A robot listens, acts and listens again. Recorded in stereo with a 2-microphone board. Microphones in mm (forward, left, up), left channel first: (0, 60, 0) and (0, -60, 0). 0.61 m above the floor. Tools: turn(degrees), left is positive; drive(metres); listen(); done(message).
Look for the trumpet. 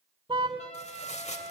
turn(degrees=70)
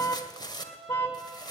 done("Found it: a trumpet, straight ahead.")